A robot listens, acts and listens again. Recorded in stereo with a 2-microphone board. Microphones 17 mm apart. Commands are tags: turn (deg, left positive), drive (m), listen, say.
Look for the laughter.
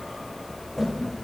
<turn deg="90"/>
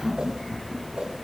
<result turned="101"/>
<say>Found it: laughter, straight ahead.</say>